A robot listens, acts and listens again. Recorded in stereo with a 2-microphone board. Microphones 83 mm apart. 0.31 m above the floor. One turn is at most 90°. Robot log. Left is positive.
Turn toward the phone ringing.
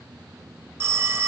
note: The phone ringing: about 30° right or 150° right.
cmd yaw -30
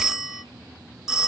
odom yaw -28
end: Found it: a phone ringing, straight ahead, under 1 m away.